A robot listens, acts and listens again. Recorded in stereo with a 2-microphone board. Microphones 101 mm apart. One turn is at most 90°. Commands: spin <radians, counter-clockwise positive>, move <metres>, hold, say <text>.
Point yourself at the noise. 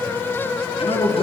spin 1.13
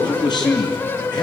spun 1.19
spin 0.79
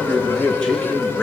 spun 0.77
spin 0.17
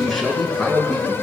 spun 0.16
say Found it: a man speaking, straight ahead.